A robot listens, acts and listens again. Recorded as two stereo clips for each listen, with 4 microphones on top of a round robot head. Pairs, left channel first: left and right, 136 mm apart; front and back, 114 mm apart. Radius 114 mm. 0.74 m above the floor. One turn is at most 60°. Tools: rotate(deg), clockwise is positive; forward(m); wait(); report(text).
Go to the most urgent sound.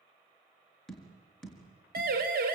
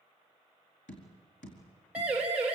rotate(60)
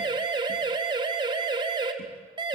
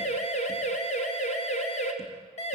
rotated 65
rotate(30)
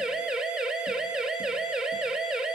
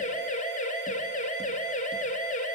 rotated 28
forward(1.0)
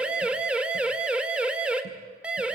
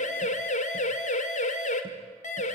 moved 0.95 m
forward(1.0)
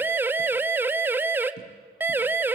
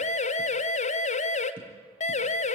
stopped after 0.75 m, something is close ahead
rotate(15)
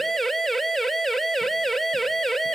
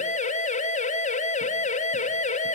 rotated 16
report("I am next to the siren.")